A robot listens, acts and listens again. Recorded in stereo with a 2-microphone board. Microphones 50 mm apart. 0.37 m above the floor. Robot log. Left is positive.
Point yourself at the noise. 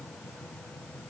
cmd idle
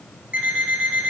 note: The alarm clock: about 30° right or 150° right.
cmd yaw -30
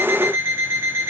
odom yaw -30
note: So it is at 120° right.
cmd yaw -120
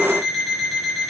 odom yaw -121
end: Facing the alarm clock, 1 to 2 m away.